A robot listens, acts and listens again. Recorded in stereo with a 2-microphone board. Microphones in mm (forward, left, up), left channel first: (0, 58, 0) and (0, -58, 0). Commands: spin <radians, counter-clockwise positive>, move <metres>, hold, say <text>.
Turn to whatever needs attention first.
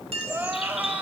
spin -0.52
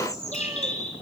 hold
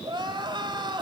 spin -2.44
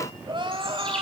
spin -0.79
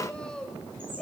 spin 0.17
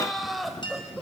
say Facing the crying, 2 to 4 m away.